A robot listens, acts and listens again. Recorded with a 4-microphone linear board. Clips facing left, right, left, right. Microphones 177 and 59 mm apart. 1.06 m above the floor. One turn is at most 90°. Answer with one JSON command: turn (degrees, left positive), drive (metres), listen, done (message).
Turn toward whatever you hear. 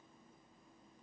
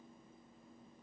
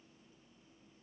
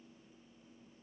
{"listen": true}
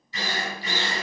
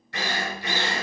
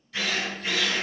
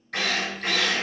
{"turn": -75}
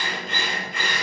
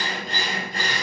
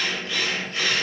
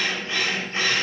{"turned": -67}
{"turn": -35}
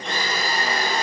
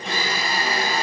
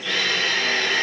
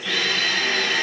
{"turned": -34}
{"done": "Facing the drill, 2 to 4 m away."}